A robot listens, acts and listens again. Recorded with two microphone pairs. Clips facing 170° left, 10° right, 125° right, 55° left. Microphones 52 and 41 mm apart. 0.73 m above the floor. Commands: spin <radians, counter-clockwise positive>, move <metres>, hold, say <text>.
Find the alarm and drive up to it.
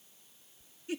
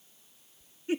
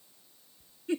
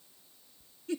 hold
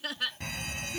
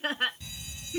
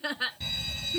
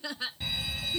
spin 2.44
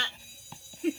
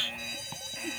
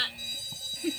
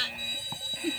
move 1.0
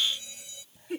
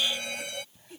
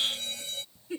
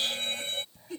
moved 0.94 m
move 1.0
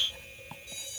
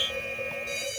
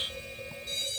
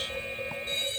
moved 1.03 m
move 1.0
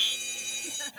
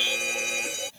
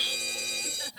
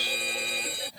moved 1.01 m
move 1.0
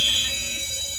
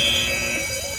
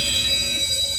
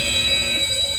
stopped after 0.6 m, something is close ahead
say I am next to the alarm.